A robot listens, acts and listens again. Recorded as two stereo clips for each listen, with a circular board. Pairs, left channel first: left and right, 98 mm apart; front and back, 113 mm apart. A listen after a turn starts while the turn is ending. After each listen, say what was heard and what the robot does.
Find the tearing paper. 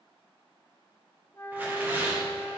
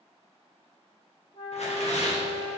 The tearing paper: 20° right. Turn 20° right.
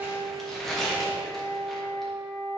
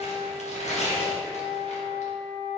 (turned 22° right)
Facing the tearing paper.